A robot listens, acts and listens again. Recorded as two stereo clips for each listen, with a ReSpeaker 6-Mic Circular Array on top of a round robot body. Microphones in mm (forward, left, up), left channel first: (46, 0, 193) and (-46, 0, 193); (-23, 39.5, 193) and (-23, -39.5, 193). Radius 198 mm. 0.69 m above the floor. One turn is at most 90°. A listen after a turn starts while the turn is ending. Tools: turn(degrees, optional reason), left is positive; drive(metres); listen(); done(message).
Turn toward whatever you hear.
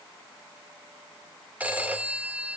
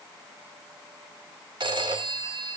turn(degrees=-90, reason="The phone ringing: 105° right.")
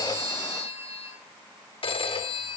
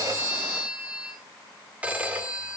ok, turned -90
turn(degrees=-15, reason="The phone ringing is now 15° right.")
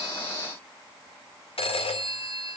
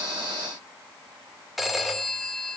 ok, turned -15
done("Facing the phone ringing, 2 to 4 m away.")